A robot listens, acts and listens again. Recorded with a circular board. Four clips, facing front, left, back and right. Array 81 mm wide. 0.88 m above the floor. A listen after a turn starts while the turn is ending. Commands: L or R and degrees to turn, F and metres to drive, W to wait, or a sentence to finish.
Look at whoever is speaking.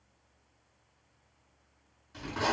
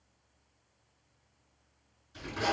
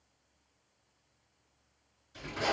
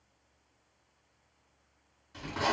W
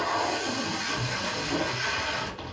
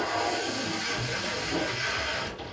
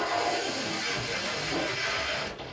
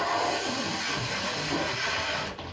W
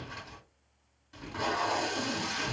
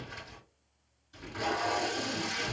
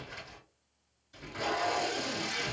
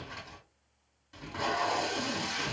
I can't make out anyone speaking, only tape being pulled.